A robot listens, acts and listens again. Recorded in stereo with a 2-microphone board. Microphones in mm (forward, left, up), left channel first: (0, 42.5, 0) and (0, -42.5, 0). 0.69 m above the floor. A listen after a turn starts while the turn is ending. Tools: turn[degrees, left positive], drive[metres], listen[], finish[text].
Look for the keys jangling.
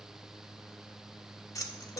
Thought: The keys jangling: about 40° left or 140° left.
Action: turn[40]
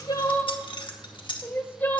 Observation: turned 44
Thought: So it is at 95° left.
Action: turn[95]
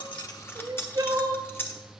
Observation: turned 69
Thought: The keys jangling is now 30° left.
Action: turn[30]
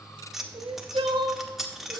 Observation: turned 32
Action: finish[Facing the keys jangling, under 1 m away.]